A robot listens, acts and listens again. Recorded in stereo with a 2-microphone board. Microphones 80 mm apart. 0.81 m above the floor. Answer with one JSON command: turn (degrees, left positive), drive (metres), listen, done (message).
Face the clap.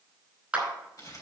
{"turn": -15}
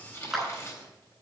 {"done": "Facing the clap, over 4 m away."}